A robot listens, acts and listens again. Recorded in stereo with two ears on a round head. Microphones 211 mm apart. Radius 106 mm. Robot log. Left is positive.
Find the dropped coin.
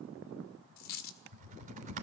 cmd yaw +90
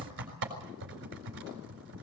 end: Facing where the dropped coin came from. I can't hear it now.